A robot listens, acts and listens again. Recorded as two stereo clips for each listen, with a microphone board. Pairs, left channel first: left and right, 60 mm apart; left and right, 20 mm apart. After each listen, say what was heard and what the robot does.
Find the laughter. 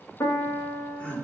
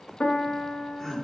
The laughter: about 25° left or 155° left. Turn 25° left.
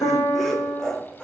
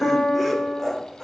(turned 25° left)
Turn 30° left.
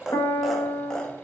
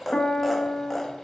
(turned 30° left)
So it is at 10° left. Turn 10° left.
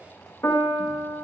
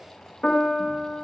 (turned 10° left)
Keep listening.
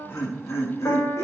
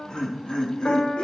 The laughter is now 55° left. Turn 55° left.
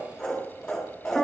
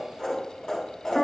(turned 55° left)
The laughter is now 10° left. Turn 10° left.
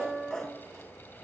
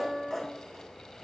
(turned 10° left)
Found it: laughter, straight ahead, 1 to 2 m away.